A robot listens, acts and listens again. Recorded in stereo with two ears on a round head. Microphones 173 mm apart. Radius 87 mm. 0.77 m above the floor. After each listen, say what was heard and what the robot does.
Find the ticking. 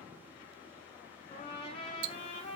Turn 90° right.
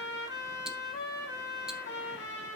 Keep listening.
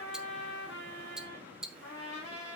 Found it: ticking, straight ahead, under 1 m away.